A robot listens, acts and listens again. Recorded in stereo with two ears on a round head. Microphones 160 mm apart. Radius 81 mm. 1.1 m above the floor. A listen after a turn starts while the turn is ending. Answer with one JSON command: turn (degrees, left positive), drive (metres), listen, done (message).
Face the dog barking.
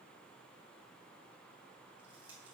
{"listen": true}
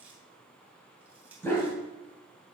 {"turn": 30}
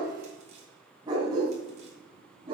{"turn": -25}
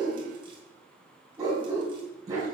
{"turn": -20}
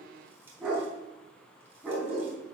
{"done": "Found it: a dog barking, straight ahead."}